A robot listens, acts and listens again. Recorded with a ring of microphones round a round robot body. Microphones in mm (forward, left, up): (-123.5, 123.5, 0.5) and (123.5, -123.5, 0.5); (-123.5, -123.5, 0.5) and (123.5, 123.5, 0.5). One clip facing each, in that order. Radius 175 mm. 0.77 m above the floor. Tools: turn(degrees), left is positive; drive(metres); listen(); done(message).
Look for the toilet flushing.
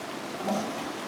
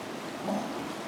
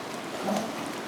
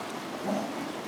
turn(degrees=180)
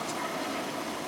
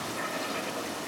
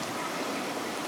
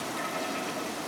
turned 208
turn(degrees=-30)
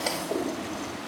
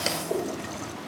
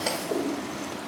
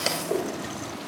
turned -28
done("Found it: a toilet flushing, straight ahead, 1 to 2 m away.")